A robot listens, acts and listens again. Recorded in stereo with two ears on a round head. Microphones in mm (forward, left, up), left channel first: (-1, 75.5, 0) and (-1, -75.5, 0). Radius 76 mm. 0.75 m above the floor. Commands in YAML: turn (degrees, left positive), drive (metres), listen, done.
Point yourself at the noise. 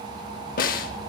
turn: 55
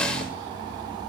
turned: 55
done: "Facing the snare drum, under 1 m away."